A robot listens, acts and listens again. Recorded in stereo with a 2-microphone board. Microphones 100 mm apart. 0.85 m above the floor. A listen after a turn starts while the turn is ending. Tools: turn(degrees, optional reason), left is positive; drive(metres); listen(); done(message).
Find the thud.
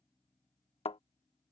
turn(degrees=90)
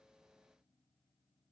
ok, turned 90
done("I heard a thud from this way, but can't make it out now.")